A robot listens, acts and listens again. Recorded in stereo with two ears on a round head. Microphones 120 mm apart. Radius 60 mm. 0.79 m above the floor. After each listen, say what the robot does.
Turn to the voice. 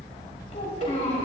Turn 55° left.
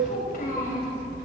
Turn 70° left.
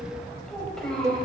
Facing the child speaking.